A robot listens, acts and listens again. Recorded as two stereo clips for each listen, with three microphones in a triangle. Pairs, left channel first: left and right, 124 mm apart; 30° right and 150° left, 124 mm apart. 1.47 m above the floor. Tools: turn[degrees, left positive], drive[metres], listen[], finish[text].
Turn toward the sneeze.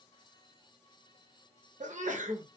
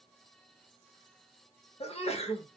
Thought: The sneeze: 70° right.
Action: turn[-70]
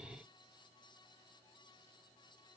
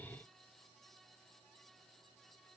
Action: finish[I heard a sneeze from this way, but can't make it out now.]